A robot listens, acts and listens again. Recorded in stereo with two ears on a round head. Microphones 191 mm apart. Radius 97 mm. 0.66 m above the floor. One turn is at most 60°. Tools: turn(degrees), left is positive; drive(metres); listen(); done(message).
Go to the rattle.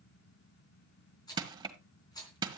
turn(degrees=20)
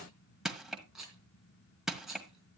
drive(metres=1.0)
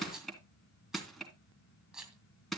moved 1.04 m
drive(metres=1.0)
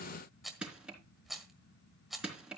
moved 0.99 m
drive(metres=1.0)
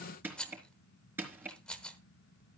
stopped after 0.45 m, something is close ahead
done("Arrived at the rattle, straight ahead.")